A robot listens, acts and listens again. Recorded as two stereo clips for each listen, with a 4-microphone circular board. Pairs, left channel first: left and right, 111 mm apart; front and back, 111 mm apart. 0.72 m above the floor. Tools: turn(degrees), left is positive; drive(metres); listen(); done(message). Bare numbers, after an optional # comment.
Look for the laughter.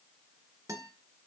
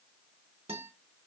listen()
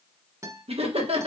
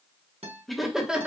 # The laughter: 100° right.
turn(-100)
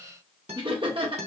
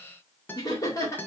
# The laughter is now 60° right.
turn(-60)
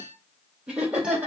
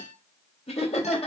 # The laughter is now 10° right.
turn(-10)
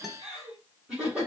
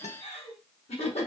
# The laughter is now 10° right.
turn(-10)
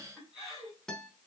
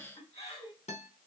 done("Facing the laughter.")